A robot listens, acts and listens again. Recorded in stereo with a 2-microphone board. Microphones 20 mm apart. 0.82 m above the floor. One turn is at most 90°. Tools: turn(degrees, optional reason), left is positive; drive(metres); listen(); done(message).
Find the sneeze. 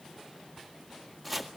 listen()
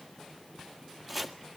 listen()
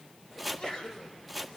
turn(degrees=35, reason="The sneeze: about 35° left or 145° left.")
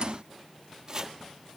listen()
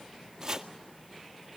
done("I heard a sneeze, but can't make it out now. It was about straight ahead or 110° left.")